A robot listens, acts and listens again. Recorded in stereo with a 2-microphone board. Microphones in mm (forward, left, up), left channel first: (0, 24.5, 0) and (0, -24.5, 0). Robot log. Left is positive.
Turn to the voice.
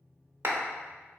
cmd idle
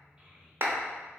note: The child speaking: about 20° right or 160° right.
cmd yaw -20
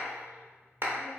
cmd idle
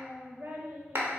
note: So it is at 135° right.
cmd yaw -135
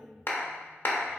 end: Found it: a child speaking, straight ahead, 1 to 2 m away.